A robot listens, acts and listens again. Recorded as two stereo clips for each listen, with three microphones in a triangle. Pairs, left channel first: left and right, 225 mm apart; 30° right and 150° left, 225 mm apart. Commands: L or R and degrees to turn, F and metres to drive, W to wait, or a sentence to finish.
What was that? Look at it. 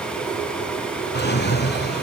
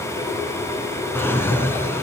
L50
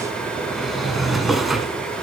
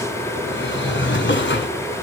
Found it: a drawer, straight ahead.